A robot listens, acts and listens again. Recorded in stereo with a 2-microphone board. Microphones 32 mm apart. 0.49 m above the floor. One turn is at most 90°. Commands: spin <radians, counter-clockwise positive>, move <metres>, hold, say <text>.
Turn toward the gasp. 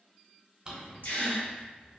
spin 1.57
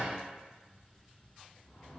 say Facing where the gasp came from. I can't hear it now.